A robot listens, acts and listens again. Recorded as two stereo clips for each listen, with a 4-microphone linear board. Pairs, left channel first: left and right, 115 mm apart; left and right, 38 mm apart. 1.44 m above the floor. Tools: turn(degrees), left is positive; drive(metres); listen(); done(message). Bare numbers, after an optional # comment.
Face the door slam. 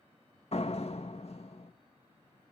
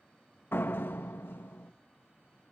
# The door slam: about 65° left or 115° left.
turn(65)
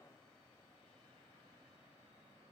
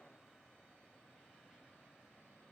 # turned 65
listen()
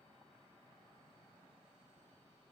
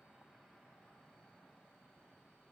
done("I heard a door slam, but can't make it out now. It was about straight ahead or 50° left.")